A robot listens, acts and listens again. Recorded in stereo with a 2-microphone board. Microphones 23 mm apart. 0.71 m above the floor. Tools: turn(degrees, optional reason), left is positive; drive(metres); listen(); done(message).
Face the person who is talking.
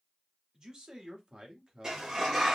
turn(degrees=-55, reason="The man speaking: about 55° right or 125° right.")
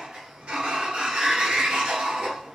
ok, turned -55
listen()
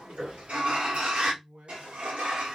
turn(degrees=-65, reason="So it is at 65° right.")
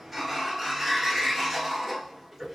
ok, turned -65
listen()
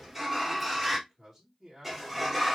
turn(degrees=-10, reason="The man speaking is now 10° right.")
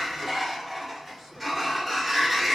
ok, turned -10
listen()
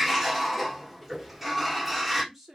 done("Facing the man speaking.")